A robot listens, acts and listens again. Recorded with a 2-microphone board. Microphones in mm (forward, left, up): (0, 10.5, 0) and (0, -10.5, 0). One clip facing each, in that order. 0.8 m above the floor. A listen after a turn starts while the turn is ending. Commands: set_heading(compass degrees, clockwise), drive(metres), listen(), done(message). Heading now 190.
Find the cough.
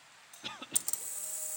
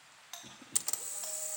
set_heading(125)
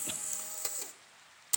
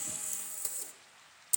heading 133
listen()
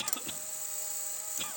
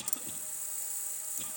set_heading(93)
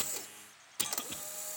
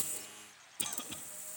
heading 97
listen()
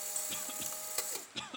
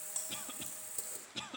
done("Found it: a cough, straight ahead.")